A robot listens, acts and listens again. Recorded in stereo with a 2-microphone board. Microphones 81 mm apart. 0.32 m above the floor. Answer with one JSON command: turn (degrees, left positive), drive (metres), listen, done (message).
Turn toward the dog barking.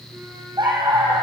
{"turn": -90}
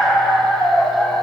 {"done": "Found it: a dog barking, straight ahead."}